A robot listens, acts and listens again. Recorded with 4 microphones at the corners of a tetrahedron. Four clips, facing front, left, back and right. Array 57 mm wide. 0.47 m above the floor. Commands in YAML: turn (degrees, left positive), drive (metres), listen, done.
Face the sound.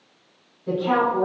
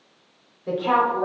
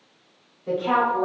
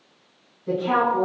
turn: 105
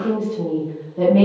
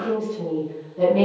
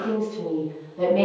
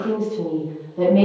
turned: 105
turn: -25
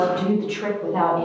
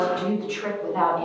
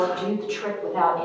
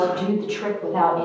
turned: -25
turn: -45
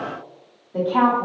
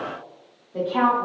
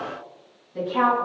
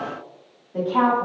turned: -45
turn: -10
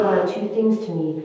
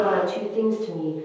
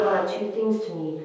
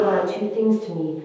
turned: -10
done: "Found it: a woman speaking, straight ahead."